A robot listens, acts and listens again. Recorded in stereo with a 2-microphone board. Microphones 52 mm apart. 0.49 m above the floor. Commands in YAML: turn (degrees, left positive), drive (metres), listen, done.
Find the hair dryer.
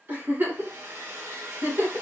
turn: -60
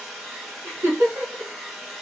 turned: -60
done: "Facing the hair dryer, under 1 m away."